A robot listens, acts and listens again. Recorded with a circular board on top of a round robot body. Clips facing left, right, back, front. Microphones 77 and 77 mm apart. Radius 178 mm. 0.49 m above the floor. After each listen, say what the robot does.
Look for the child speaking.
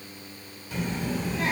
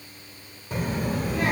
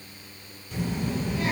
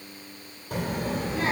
Turn 55° right.
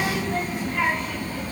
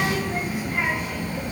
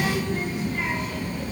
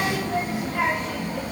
Turn 20° right.
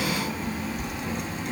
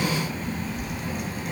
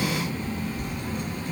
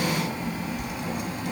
Found it: a child speaking, straight ahead, 2 to 4 m away.